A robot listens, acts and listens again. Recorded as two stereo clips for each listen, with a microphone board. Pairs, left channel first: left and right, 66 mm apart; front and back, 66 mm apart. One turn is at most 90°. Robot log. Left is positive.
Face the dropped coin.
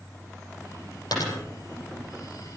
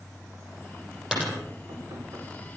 note: The dropped coin: 100° left.
cmd yaw +90
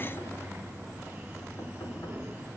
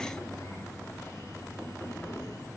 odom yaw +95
end: Facing where the dropped coin came from. I can't hear it now.